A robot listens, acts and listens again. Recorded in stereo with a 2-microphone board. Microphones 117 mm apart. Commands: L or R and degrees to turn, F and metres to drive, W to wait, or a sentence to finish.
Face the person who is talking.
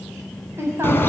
R20
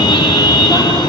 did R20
W
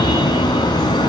W
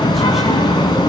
I heard a woman speaking, but can't make it out now. It was about straight ahead or 140° right.